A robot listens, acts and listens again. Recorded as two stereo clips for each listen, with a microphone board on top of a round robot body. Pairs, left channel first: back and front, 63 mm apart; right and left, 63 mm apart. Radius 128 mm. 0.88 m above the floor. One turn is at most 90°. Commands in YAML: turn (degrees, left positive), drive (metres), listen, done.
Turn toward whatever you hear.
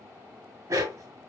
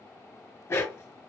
turn: -45
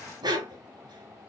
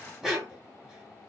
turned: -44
done: "Found it: a dog barking, straight ahead, 1 to 2 m away."